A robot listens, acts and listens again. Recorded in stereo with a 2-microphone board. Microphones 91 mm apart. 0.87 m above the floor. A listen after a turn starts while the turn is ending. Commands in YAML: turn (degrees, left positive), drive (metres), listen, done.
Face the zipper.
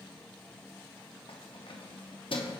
listen: true
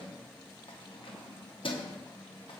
listen: true
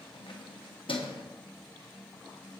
done: "I can't make out a zipper to turn to."